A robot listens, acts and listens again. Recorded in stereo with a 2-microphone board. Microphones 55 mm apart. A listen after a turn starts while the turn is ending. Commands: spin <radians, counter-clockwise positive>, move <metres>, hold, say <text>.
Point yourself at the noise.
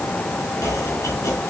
spin 1.22
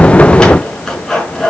spin 0.17
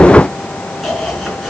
say Facing the chopping, 2 to 4 m away.